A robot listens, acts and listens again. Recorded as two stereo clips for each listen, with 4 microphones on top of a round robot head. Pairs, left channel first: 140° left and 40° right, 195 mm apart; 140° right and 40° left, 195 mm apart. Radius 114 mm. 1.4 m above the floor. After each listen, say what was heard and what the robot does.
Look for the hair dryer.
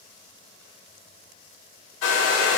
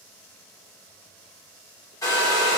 The hair dryer: 145° left. Turn 145° left.
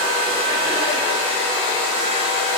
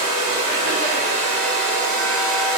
The hair dryer is now 30° left. Turn 30° left.
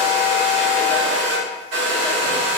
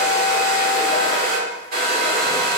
Facing the hair dryer.